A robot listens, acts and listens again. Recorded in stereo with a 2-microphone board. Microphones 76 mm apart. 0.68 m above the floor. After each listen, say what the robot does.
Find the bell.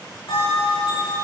Turn 75° left.
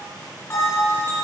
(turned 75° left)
Turn 30° left.
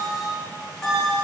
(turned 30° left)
Facing the bell, over 4 m away.